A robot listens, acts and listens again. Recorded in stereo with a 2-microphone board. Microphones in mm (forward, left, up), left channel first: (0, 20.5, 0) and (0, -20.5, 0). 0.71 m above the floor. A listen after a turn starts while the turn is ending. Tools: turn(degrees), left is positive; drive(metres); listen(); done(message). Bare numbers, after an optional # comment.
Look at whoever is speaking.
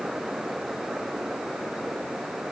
listen()
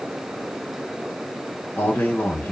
# The man speaking: about 65° left or 115° left.
turn(65)
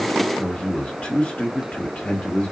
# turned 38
# So it is at 40° left.
turn(40)
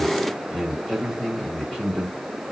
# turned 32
# The man speaking is now 10° left.
turn(10)
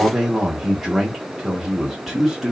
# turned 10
done("Facing the man speaking.")